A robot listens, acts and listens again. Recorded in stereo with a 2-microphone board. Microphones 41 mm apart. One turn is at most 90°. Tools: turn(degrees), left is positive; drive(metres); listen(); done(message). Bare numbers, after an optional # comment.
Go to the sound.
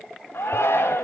turn(90)
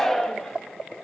# So it is at 10° left.
turn(10)
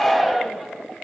drive(1.0)
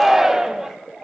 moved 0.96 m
# The shout is now 10° right.
turn(-10)
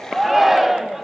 drive(1.0)
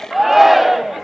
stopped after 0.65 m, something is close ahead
done("I am next to the shout.")